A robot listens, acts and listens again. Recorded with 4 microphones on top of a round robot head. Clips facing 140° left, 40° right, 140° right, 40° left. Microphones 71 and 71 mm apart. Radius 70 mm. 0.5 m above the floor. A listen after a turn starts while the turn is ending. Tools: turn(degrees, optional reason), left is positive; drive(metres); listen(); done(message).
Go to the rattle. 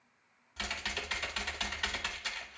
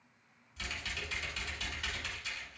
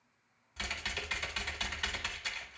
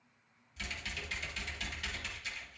listen()
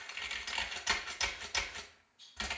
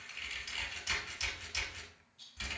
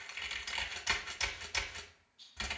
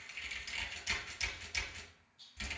turn(degrees=-20, reason="The rattle: 20° right.")
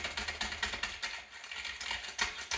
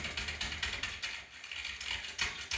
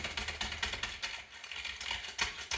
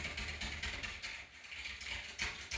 listen()
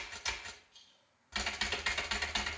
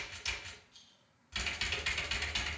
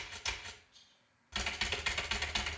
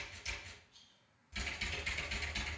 drive(metres=1.0)
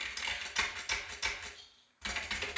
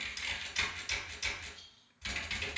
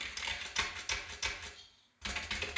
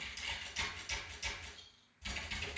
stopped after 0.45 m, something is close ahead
done("Blocked. The rattle is further on, straight ahead.")